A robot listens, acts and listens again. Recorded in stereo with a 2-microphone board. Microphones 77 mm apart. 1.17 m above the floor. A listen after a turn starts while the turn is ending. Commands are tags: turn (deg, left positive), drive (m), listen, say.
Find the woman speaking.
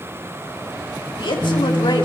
<turn deg="90"/>
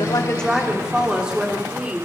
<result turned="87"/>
<turn deg="-15"/>
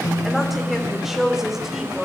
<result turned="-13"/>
<say>Found it: a woman speaking, straight ahead.</say>